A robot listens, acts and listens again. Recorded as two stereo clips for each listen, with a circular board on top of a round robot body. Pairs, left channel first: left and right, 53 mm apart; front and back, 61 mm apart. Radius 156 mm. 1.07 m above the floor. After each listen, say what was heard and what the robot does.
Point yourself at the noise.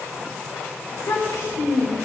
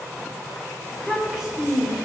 The child speaking: 100° left. Turn 100° left.
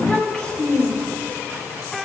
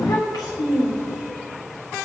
The child speaking is now 20° left. Turn 20° left.
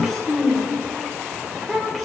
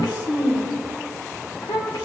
Facing the child speaking.